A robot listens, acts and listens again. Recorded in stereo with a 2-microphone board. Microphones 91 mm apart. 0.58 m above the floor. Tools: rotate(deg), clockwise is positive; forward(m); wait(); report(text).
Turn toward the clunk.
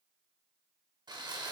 wait()
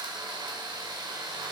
wait()
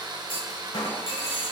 rotate(-90)
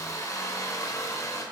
report("I heard a clunk from this way, but can't make it out now.")